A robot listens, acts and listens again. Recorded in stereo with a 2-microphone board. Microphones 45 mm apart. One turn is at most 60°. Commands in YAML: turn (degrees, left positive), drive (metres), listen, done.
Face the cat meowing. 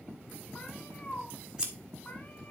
turn: 40
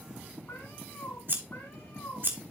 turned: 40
turn: 60
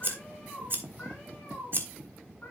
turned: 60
turn: 35
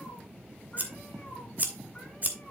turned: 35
listen: true
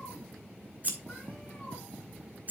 listen: true
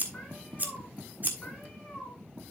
turn: 20
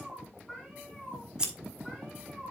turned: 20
done: "Facing the cat meowing, over 4 m away."